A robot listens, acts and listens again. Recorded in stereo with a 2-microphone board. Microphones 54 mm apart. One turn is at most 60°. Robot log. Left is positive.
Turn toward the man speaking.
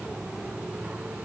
cmd idle
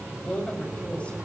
note: The man speaking: about 25° left or 155° left.
cmd yaw +25
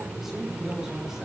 cmd idle
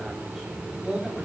note: So it is at 10° right.
cmd yaw -10
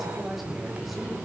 end: Found it: a man speaking, straight ahead.